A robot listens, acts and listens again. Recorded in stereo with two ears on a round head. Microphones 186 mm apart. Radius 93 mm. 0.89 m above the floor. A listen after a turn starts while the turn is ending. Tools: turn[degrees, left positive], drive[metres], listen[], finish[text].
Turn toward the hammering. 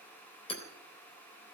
Thought: The hammering: about 30° left or 150° left.
Action: turn[30]
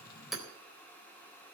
Action: finish[Found it: hammering, straight ahead, 2 to 4 m away.]